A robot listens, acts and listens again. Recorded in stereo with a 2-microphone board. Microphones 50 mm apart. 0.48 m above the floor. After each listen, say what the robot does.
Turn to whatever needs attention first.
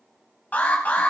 Turn 35° left.
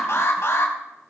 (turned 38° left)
Turn 110° left.
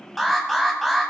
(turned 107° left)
Found it: an alarm, straight ahead, 2 to 4 m away.